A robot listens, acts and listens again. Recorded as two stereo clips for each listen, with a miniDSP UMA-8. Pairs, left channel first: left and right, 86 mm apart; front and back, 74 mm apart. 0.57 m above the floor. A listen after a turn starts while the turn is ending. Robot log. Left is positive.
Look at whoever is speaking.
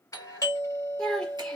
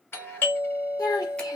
note: The child speaking: 10° left.
cmd yaw +10
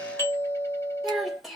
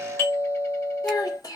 end: Found it: a child speaking, straight ahead.